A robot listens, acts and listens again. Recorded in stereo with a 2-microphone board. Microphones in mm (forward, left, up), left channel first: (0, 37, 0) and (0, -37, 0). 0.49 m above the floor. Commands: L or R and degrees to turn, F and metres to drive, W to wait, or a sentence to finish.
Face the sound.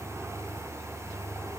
W
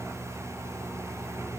W
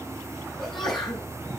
L30
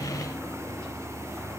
W
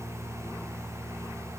I heard a sneeze, but can't make it out now. It was about 25° right or 145° left.